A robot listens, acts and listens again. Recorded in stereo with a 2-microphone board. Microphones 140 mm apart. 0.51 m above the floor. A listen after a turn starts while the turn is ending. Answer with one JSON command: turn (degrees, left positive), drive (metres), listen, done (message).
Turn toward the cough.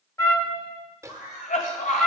{"turn": 70}
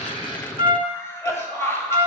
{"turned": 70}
{"turn": 20}
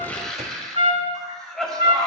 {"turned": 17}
{"done": "Facing the cough, 2 to 4 m away."}